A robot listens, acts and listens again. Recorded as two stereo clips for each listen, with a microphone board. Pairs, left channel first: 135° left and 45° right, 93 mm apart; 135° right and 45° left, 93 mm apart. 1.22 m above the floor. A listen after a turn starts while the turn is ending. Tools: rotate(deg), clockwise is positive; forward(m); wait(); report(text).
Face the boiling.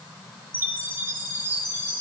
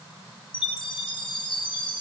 wait()
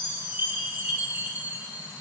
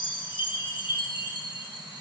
wait()
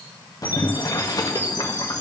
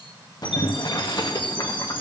rotate(175)
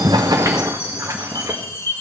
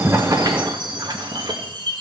rotate(-10)
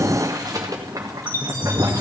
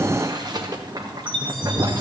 report("Found it: boiling, straight ahead, 1 to 2 m away.")